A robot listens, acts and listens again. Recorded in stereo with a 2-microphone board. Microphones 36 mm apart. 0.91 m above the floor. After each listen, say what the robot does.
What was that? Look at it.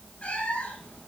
Turn 45° left.
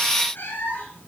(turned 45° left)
Turn 100° left.
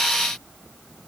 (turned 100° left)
Keep listening.
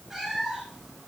Turn 15° right.
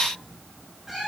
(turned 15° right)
Turn 10° right.
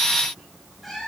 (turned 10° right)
Found it: a cat meowing, straight ahead, over 4 m away.